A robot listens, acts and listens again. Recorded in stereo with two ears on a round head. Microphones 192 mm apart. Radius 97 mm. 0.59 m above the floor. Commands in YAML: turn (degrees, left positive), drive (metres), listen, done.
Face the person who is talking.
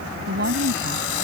turn: -45
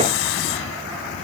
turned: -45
listen: true
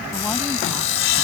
listen: true
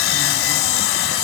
done: "I heard a woman speaking, but can't make it out now. It was about straight ahead or 90° right."